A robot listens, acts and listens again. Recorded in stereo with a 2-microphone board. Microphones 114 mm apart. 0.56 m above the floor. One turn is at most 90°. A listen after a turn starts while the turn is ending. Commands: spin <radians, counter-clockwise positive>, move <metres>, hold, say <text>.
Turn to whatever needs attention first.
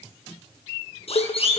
spin 1.05
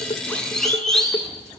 say Facing the siren.